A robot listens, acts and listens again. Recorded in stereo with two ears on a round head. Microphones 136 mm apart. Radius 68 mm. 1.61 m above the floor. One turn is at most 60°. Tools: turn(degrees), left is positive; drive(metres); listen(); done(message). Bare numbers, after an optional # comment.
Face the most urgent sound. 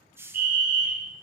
# The fire alarm: about 60° right or 120° right.
turn(-60)
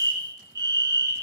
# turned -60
# So it is at 30° right.
turn(-30)
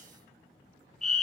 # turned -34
done("Found it: a fire alarm, straight ahead, 1 to 2 m away.")